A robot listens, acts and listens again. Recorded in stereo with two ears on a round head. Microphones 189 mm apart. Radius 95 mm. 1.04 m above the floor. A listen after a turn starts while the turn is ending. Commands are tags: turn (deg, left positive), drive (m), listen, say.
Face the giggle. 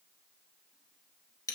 <listen/>
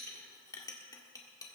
<listen/>
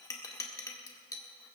<say>I can't make out a giggle to turn to.</say>